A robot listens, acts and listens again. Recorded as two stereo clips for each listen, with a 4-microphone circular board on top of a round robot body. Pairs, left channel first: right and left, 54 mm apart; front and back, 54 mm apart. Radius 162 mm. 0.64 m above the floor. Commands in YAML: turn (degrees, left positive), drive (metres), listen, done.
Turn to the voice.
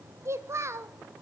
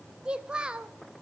turn: 110
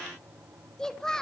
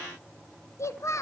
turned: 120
turn: -15
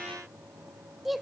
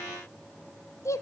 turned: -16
done: "Facing the child speaking."